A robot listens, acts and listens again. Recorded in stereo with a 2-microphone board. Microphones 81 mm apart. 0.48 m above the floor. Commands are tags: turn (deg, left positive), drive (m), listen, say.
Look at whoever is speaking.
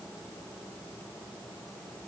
<listen/>
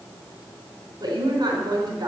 <turn deg="-55"/>
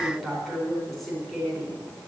<say>Facing the woman speaking.</say>